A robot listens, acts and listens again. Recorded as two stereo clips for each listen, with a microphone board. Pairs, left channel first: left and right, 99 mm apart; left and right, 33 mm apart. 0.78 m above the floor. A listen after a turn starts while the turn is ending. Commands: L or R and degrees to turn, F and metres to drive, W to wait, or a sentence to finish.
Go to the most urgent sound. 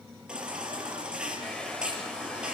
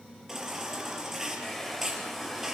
R30
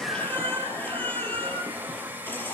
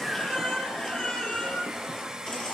L20
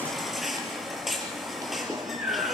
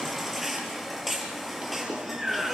F1.0
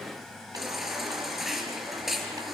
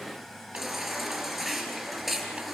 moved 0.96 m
F1.0
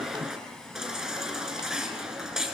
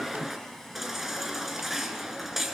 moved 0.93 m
F1.0
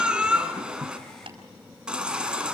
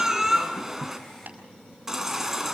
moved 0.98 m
R10
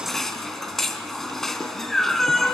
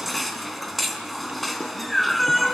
F1.0
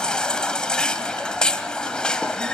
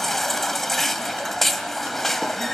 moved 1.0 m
L10
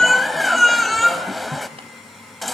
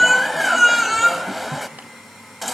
F1.0
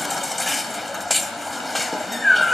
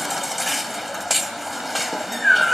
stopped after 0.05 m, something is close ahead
I am next to the baby crying.